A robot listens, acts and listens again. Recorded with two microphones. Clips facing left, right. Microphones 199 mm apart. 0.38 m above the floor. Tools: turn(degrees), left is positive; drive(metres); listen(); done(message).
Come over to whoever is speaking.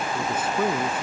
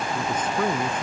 turn(degrees=30)
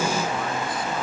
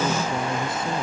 listen()
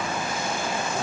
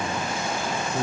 turn(degrees=-25)
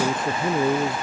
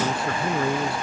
turn(degrees=20)
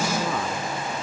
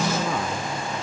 drive(metres=1.0)
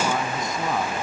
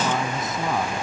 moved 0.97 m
drive(metres=1.0)
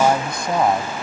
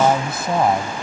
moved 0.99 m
drive(metres=1.0)
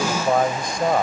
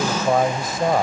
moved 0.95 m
drive(metres=1.0)
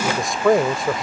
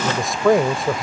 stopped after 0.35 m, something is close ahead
done("Arrived at the man speaking, straight ahead.")